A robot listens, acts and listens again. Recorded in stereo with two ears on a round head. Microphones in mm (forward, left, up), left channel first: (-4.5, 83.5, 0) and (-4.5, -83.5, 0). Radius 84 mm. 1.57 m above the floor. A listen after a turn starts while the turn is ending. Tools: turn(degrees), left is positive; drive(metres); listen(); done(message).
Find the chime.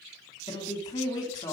listen()
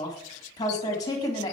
listen()
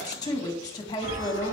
turn(degrees=-55)
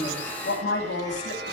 turn(degrees=-65)
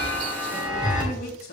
turn(degrees=-25)
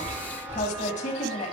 turn(degrees=-10)
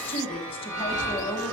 done("Facing the chime.")